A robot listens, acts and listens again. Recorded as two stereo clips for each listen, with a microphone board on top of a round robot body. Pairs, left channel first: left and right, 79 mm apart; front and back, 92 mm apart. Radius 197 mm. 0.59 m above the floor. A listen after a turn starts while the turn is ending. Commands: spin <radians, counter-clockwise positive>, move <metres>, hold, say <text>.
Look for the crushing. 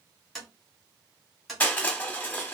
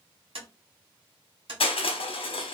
spin 0.35
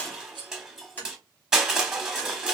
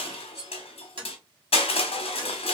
say Facing the crushing.